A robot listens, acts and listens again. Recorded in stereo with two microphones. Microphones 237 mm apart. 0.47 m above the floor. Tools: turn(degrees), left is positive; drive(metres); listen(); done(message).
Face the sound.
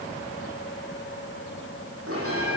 turn(degrees=-70)
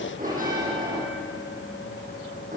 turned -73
turn(degrees=-35)
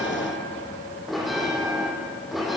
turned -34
done("Found it: a bell, straight ahead, over 4 m away.")